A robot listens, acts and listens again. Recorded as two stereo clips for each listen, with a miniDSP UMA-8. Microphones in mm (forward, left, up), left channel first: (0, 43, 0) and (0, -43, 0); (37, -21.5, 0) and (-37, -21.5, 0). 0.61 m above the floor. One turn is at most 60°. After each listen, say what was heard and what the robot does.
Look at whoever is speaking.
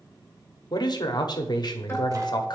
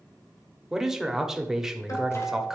The man speaking: 100° left. Turn 60° left.
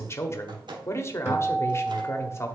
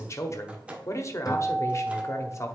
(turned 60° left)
The man speaking is now 40° left. Turn 40° left.
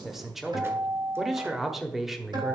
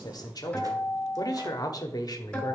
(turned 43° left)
Facing the man speaking.